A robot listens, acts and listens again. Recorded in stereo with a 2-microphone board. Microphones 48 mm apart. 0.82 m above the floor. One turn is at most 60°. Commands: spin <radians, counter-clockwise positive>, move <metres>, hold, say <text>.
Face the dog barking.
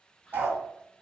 spin -0.70
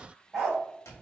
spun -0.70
say Facing the dog barking.